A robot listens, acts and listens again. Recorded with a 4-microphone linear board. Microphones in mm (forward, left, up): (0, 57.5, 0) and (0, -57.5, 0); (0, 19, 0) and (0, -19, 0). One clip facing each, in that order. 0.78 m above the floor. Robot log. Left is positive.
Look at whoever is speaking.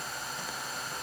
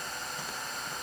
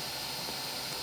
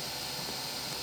cmd idle
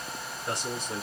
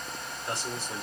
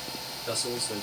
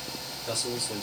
note: The man speaking: about 20° left or 160° left.
cmd yaw +20
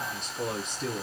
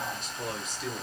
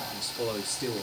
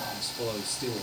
note: So it is at 140° left.
cmd yaw +140
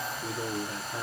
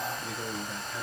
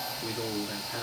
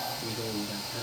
note: The man speaking is now 55° left.
cmd yaw +55
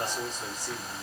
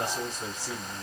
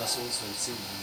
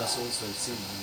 end: Facing the man speaking, 2 to 4 m away.